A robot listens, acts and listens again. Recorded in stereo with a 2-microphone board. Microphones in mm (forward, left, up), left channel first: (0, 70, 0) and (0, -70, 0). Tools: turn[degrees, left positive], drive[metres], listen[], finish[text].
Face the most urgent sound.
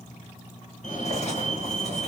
Thought: The fire alarm: about 60° left or 120° left.
Action: turn[60]
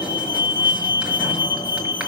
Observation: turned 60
Thought: So it is at 35° left.
Action: turn[35]
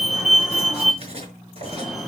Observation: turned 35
Action: finish[Found it: a fire alarm, straight ahead, 2 to 4 m away.]